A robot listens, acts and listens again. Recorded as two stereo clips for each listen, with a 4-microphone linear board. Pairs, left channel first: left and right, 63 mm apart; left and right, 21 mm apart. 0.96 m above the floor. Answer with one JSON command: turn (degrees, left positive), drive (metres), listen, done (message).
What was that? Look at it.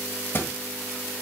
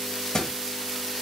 {"turn": 40}
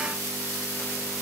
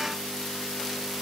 {"listen": true}
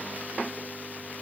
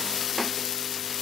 {"done": "I heard a thud, but can't make it out now. It was about straight ahead or 100° left."}